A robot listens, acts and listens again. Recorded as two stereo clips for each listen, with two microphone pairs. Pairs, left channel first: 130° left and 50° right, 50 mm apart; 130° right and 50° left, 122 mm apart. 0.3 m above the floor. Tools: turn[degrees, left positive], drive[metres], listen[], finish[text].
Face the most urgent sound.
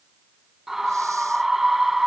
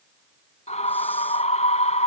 Thought: The scream: 130° right.
Action: turn[-130]
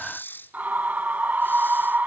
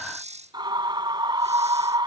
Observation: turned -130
Action: finish[Found it: a scream, straight ahead.]